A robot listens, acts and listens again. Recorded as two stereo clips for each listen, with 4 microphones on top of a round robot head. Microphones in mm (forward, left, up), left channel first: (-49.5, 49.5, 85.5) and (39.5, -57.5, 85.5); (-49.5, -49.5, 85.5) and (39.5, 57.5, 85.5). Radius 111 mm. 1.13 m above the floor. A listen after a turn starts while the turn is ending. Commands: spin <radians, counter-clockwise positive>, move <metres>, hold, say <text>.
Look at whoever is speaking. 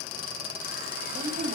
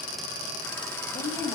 spin -1.40
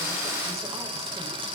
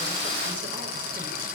hold
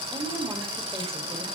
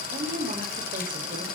spin 0.35
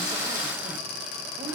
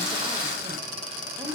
hold
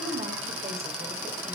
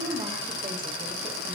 say Found it: a woman speaking, straight ahead, over 4 m away.